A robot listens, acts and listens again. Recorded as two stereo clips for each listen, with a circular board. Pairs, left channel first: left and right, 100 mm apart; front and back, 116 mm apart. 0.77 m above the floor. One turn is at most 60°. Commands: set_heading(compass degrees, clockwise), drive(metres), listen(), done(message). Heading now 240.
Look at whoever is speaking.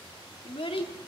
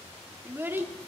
set_heading(180)
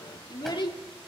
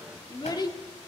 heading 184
set_heading(134)
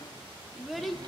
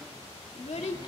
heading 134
done("Found it: a child speaking, straight ahead, 1 to 2 m away.")